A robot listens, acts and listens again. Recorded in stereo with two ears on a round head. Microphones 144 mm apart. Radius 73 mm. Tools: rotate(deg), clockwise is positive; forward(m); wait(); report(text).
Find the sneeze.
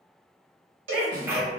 rotate(15)
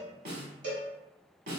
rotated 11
wait()
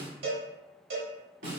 report("I heard a sneeze, but can't make it out now. It was about 5° right or 150° right.")